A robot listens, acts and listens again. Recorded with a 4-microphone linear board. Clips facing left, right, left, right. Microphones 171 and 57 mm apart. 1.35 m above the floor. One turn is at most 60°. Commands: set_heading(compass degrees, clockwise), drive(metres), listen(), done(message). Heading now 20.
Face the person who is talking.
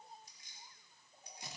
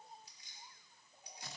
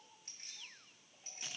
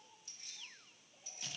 listen()
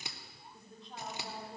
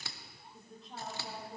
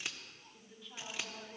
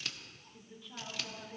set_heading(350)
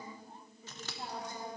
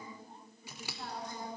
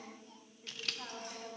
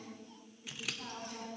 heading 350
set_heading(290)
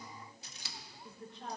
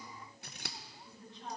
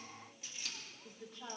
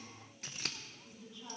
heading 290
set_heading(230)
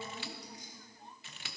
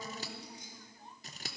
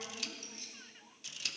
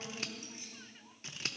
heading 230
set_heading(205)
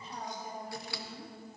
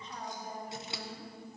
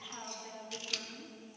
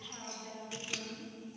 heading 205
done("Facing the woman speaking, 2 to 4 m away.")